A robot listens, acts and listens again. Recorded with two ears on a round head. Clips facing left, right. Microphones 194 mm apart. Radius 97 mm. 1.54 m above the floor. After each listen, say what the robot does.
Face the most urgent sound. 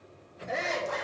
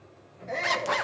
Turn 30° left.
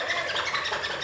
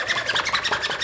Keep listening.
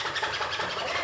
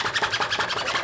Keep listening.
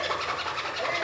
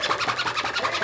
I heard a shout, but can't make it out now. It was about 20° right or 140° left.